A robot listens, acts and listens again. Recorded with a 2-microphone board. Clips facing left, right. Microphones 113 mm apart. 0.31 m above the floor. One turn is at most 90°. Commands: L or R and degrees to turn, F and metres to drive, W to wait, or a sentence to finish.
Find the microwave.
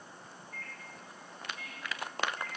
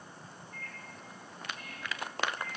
L60
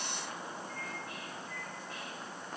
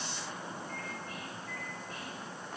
L45
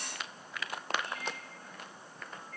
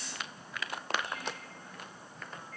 Facing the microwave, 2 to 4 m away.